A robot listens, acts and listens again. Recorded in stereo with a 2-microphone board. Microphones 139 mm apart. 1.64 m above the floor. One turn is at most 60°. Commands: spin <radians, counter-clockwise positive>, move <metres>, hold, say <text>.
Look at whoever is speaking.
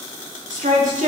spin -1.05
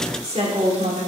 spin -0.87
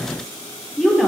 say Found it: a woman speaking, straight ahead, 2 to 4 m away.